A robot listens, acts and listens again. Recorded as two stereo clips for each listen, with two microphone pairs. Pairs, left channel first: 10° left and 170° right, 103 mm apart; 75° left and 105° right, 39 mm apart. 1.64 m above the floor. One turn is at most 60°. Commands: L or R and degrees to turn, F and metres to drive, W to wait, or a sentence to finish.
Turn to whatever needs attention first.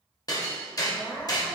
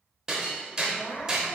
L60
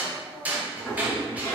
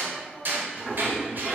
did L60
Facing the crying.